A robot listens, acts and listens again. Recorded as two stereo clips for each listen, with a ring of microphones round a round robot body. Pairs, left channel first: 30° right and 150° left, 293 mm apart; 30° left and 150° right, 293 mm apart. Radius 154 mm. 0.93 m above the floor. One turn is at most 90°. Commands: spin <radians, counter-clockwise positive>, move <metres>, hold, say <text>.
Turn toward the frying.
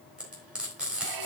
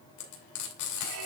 spin 1.13
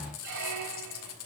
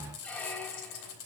spin 0.17
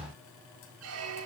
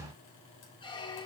hold
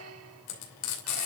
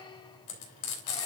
say Found it: frying, straight ahead, 2 to 4 m away.